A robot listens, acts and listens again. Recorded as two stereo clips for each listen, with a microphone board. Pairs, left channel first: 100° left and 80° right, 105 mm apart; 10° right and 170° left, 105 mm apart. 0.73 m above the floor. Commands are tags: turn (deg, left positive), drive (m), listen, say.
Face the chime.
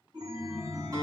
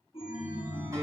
<turn deg="-35"/>
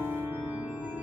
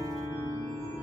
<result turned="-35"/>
<say>Facing the chime.</say>